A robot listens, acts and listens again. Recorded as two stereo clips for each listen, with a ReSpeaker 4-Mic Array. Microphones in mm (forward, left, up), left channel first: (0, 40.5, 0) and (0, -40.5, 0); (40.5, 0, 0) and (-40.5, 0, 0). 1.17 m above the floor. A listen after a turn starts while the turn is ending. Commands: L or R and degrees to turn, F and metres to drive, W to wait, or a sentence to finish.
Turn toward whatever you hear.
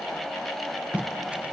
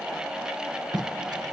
R160
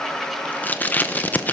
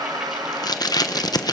L25
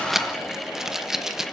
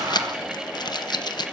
Facing the tape being pulled, 1 to 2 m away.